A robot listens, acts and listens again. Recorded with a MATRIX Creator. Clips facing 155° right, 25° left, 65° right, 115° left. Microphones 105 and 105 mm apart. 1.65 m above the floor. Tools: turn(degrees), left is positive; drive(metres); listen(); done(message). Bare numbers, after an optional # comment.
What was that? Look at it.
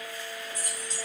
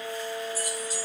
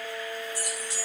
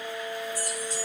# The keys jangling: 60° right.
turn(-60)
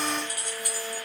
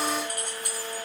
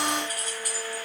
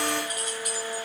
# The keys jangling is now 15° right.
turn(-15)
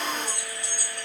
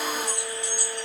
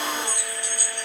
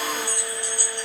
done("Found it: keys jangling, straight ahead, over 4 m away.")